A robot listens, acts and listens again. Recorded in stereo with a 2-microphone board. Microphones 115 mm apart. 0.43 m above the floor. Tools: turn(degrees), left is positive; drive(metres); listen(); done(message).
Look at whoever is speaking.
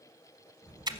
turn(degrees=-90)
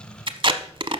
turn(degrees=15)
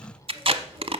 done("Facing the child speaking, over 4 m away.")